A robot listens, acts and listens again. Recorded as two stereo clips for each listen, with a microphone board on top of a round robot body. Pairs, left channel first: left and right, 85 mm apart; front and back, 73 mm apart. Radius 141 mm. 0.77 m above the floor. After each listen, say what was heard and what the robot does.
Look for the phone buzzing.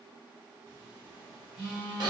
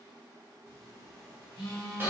The phone buzzing: 15° right. Turn 15° right.
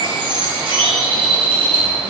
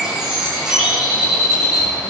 Keep listening.
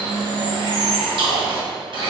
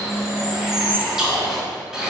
Found it: a phone buzzing, straight ahead.